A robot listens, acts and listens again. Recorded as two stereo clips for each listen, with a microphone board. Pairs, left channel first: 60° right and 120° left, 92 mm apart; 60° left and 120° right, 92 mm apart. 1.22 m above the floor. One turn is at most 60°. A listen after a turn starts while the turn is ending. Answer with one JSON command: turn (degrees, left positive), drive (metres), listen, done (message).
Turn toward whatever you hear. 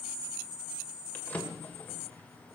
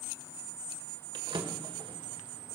{"turn": -60}
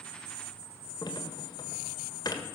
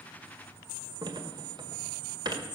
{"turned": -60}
{"turn": -60}
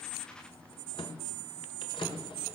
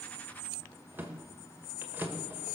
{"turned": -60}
{"turn": -55}
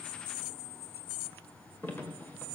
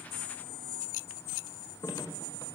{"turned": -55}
{"done": "Found it: a drawer, straight ahead, 1 to 2 m away."}